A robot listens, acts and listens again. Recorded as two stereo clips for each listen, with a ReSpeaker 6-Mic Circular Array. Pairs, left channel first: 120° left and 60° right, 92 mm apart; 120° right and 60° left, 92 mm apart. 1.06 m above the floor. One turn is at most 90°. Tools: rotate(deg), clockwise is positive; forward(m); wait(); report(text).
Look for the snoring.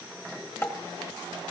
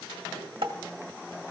wait()
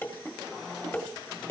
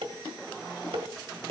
wait()
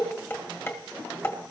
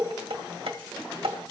report("I can't make out snoring, only dishes clattering.")